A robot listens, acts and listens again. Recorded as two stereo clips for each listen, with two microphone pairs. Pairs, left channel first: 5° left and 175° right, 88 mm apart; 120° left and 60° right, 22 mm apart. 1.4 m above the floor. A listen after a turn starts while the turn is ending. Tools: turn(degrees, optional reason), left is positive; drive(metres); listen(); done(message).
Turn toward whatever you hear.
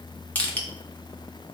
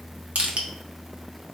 turn(degrees=-65, reason="The crushing: 65° right.")
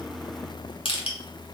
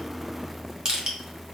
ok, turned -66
done("Facing the crushing, 1 to 2 m away.")